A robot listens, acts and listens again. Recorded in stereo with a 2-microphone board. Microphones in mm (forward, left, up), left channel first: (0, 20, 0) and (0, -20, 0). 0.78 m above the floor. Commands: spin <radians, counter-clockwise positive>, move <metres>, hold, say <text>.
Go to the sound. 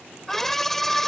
spin 0.52
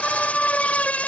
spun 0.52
spin 2.53
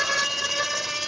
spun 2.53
move 1.0
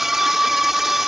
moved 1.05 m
spin -0.17
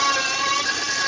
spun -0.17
move 1.0
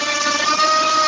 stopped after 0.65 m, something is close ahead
say I am next to the scream.